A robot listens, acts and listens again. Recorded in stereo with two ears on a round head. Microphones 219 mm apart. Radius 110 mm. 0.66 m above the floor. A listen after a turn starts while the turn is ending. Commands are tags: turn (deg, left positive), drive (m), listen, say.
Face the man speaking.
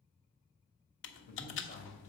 <turn deg="30"/>
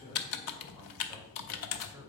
<turn deg="-10"/>
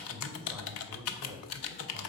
<turn deg="-15"/>
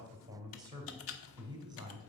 <turn deg="-15"/>
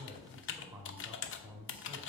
<say>Found it: a man speaking, straight ahead, 2 to 4 m away.</say>